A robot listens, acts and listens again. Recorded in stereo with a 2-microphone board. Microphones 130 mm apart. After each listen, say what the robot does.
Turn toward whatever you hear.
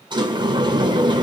Turn 35° right.
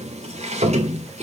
Turn 105° right.
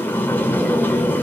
Turn 15° left.
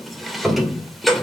Facing the sliding door.